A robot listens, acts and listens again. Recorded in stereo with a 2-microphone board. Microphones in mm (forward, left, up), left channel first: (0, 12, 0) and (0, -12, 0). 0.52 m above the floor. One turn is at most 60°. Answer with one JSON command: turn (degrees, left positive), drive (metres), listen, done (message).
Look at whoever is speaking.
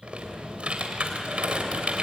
{"listen": true}
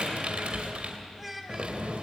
{"turn": -30}
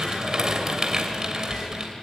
{"listen": true}
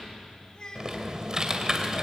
{"turn": 30}
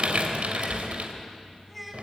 {"done": "Facing the child speaking."}